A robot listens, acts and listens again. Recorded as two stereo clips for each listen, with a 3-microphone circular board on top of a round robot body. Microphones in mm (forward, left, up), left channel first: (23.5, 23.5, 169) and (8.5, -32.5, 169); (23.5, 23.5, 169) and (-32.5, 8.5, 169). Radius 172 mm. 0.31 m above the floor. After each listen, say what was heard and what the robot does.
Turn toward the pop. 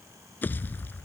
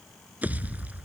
The pop: 130° left. Turn 130° left.
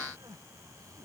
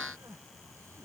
I heard a pop from this way, but can't make it out now.